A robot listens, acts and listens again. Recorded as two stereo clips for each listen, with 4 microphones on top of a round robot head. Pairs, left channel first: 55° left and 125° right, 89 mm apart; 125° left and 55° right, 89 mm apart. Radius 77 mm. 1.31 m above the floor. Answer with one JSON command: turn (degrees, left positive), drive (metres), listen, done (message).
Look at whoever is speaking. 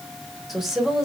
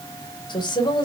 {"turn": 155}
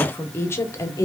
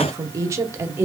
{"done": "Found it: a woman speaking, straight ahead."}